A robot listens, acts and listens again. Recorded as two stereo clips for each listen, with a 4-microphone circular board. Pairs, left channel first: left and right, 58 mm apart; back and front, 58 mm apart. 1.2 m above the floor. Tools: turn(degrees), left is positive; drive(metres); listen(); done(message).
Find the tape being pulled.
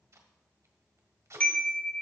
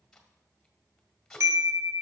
turn(degrees=-95)
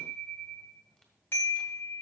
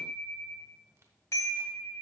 listen()
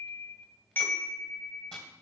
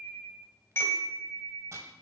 listen()
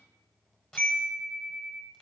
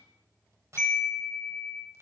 turn(degrees=20)
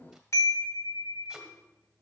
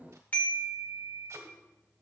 listen()
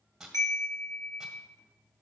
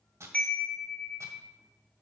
done("Found it: tape being pulled, straight ahead, 1 to 2 m away.")